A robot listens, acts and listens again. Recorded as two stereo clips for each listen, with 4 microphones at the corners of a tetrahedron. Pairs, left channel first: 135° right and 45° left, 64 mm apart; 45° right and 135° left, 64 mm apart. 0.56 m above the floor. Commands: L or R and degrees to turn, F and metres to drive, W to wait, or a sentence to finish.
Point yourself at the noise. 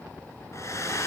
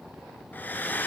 R105
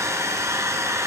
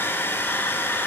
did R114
L10
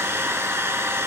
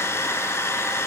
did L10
Facing the hair dryer, 1 to 2 m away.